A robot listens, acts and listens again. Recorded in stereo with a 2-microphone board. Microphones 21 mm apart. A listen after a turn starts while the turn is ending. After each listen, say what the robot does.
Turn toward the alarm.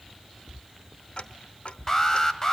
Turn 25° left.
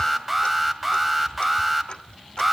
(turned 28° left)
Facing the alarm.